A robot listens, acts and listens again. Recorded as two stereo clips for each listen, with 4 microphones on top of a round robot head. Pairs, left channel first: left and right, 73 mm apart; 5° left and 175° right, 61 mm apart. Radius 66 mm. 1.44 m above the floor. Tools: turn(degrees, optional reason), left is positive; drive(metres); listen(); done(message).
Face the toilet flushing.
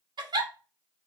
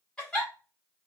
listen()
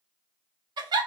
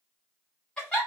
listen()
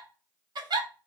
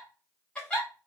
done("I can't make out a toilet flushing, only a giggle.")